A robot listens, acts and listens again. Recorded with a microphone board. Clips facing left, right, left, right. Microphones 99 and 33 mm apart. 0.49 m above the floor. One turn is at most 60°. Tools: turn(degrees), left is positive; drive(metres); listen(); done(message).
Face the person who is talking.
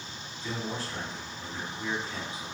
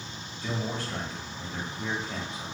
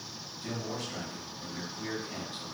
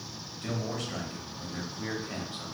turn(degrees=-60)
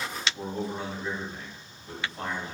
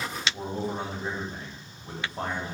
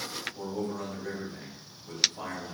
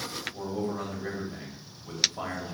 turn(degrees=-35)
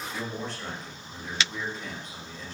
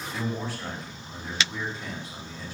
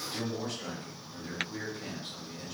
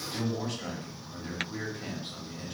done("Facing the man speaking.")